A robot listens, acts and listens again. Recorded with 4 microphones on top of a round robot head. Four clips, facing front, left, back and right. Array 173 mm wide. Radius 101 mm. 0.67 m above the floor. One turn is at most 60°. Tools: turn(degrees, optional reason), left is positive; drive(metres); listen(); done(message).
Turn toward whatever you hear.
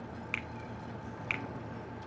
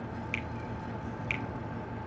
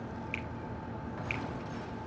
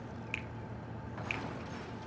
turn(degrees=15, reason="The finger snap: 15° left.")
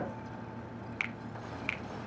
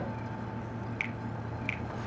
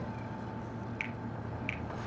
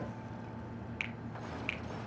done("Facing the finger snap.")